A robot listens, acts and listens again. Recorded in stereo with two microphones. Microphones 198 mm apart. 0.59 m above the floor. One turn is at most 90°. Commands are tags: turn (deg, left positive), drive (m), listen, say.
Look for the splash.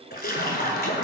<turn deg="50"/>
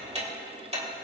<listen/>
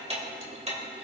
<say>I heard a splash, but can't make it out now. It was about straight ahead or 80° left.</say>